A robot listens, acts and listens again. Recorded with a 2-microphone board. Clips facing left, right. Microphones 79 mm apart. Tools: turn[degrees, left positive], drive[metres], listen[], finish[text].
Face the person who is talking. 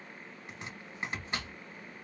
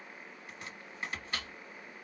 Action: listen[]
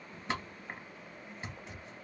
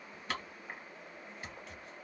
Action: listen[]
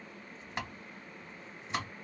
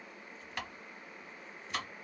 Action: finish[I can't make out anyone speaking, only chopping.]